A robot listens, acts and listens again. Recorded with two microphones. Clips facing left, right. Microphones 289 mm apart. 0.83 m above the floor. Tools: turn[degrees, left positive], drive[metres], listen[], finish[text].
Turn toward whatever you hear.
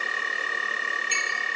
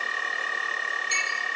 Action: listen[]
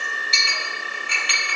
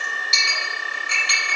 Thought: The clink: about 50° right or 130° right.
Action: turn[-50]
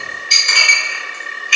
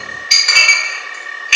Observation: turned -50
Thought: So it is at 80° right.
Action: turn[-80]
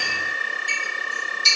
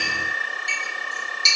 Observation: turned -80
Thought: The clink is now 25° right.
Action: turn[-25]
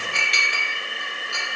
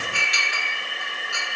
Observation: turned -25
Action: finish[Facing the clink.]